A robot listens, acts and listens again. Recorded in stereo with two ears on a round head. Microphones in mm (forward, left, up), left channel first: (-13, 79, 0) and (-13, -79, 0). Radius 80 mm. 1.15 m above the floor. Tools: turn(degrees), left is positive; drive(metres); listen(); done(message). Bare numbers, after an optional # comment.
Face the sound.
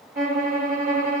# The violin: about 50° right or 130° right.
turn(-50)
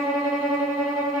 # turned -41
# So it is at 10° right.
turn(-10)
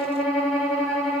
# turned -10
done("Facing the violin, 1 to 2 m away.")